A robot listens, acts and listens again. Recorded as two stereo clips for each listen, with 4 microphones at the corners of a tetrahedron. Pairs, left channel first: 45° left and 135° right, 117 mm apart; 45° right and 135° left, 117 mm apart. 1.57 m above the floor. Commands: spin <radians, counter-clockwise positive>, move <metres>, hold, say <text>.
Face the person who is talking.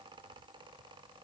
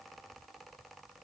hold
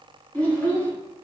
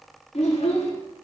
spin -0.52
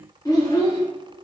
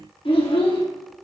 say Facing the child speaking.